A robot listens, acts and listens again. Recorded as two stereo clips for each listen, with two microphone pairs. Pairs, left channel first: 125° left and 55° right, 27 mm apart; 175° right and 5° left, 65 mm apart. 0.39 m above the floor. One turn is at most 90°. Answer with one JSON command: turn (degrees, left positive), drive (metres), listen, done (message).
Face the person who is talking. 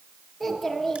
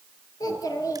{"turn": -90}
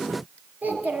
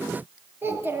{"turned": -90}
{"turn": -50}
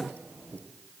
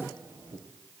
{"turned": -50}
{"turn": -25}
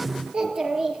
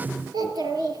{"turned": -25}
{"done": "Facing the child speaking."}